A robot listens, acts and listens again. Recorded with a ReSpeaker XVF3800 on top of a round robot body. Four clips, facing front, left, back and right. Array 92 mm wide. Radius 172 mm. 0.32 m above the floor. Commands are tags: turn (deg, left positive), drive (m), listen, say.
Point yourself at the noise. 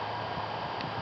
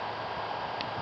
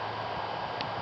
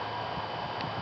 <listen/>
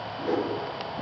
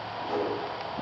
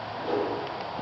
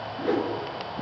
<turn deg="-75"/>
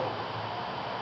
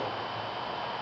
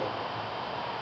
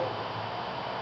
<listen/>
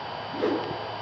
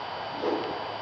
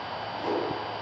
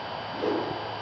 <say>Facing the whoosh, over 4 m away.</say>